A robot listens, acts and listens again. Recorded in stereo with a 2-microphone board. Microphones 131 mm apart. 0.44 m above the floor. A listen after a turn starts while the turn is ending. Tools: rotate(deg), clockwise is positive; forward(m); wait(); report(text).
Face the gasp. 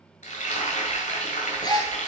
rotate(-30)
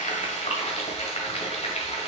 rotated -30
wait()
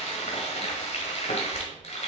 report("I heard a gasp, but can't make it out now. It was about straight ahead or 120° left.")